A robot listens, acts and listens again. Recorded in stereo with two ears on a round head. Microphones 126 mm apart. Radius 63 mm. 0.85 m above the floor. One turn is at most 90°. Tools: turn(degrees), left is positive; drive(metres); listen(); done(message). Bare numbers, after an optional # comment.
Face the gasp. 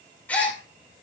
turn(30)
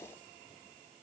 listen()
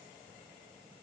done("I heard a gasp, but can't make it out now. It was about 20° right or 140° left.")